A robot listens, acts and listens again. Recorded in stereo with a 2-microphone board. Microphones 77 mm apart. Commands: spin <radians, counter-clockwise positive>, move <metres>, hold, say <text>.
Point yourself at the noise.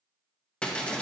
spin 0.52
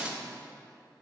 spin -0.26
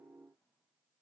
say Facing where the breaking glass came from. I can't hear it now.